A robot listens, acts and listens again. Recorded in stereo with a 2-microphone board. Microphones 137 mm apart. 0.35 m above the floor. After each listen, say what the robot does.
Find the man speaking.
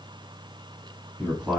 Turn 30° right.
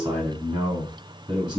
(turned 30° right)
Turn 140° right.
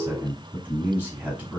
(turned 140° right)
Turn 10° right.
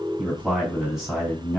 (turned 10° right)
Facing the man speaking.